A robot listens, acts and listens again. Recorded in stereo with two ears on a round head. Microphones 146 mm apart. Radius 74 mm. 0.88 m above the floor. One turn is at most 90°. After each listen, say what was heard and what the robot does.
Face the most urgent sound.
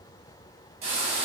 Keep listening.
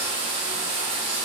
Keep listening.
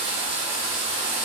I can't make out anything urgent to turn to.